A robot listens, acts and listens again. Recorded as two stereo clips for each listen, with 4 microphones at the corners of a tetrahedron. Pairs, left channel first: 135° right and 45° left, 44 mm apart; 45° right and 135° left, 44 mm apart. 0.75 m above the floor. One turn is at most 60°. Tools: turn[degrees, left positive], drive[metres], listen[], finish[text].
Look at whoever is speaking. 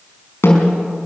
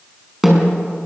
Action: listen[]
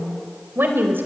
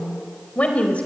Thought: The woman speaking: 15° left.
Action: turn[15]
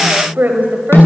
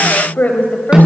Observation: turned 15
Action: finish[Found it: a woman speaking, straight ahead, over 4 m away.]